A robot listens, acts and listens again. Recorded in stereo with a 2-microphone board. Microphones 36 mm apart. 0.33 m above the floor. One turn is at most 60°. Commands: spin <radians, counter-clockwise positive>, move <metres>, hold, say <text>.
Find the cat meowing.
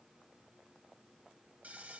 hold
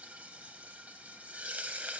hold
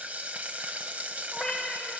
spin 0.52
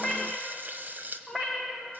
spin -0.26
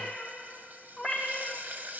say Facing the cat meowing, over 4 m away.